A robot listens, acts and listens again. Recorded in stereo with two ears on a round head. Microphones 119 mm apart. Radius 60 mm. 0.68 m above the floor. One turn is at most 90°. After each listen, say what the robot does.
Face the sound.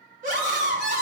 Turn 65° right.
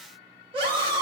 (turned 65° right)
Turn 40° right.
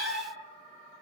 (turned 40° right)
Facing the scream.